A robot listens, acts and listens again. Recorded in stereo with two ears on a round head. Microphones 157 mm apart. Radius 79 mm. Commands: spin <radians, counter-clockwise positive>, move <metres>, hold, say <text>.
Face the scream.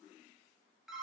hold
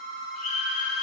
spin 0.79
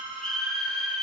say Facing the scream.